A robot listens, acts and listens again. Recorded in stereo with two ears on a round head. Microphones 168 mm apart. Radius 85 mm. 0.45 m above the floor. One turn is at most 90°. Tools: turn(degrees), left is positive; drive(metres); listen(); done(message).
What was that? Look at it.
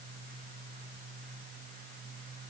listen()
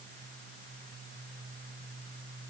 listen()
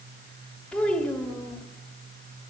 turn(degrees=30)
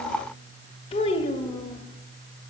turn(degrees=90)
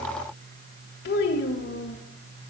turn(degrees=85)
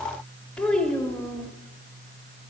done("Found it: a child speaking, straight ahead, 1 to 2 m away.")